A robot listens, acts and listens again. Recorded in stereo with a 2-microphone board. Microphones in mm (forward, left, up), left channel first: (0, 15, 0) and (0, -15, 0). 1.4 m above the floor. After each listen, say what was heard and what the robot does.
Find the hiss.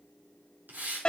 Turn 90° right.
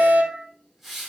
Found it: a hiss, straight ahead.